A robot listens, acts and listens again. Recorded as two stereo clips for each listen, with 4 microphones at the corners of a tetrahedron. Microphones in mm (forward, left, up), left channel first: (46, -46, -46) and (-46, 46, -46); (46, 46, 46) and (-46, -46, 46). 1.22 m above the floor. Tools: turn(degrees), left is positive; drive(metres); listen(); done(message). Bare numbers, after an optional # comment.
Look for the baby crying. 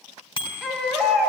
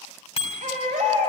# The baby crying: 140° right.
turn(-140)
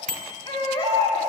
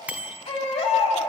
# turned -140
done("Found it: a baby crying, straight ahead.")